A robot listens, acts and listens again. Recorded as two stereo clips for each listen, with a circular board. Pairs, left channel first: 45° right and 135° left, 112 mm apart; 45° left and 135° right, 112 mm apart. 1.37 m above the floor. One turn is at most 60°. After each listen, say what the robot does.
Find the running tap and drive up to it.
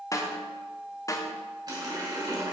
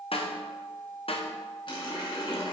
Turn 60° left.
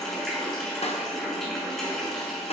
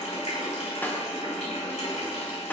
Turn 40° left.
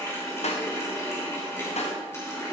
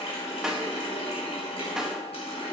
Turn 20° left.
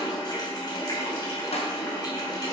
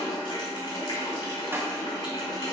Drive 1.0 m forward.
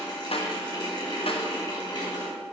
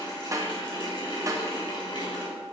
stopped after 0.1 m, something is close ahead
Something is in my way. I am facing the running tap but have not reached it.